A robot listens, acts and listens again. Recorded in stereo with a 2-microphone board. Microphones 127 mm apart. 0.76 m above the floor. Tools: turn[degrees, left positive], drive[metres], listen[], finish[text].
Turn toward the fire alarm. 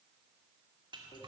Action: listen[]
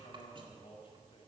Action: listen[]
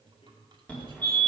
Action: turn[30]
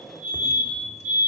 Thought: So it is at 20° right.
Action: turn[-20]
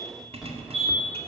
Action: finish[Facing the fire alarm.]